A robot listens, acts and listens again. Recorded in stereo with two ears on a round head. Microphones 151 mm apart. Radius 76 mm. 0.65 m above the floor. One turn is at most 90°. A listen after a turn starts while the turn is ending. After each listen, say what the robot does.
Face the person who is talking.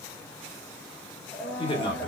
Turn 30° left.
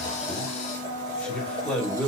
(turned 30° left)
Turn 10° left.
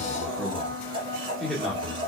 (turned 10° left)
Facing the man speaking.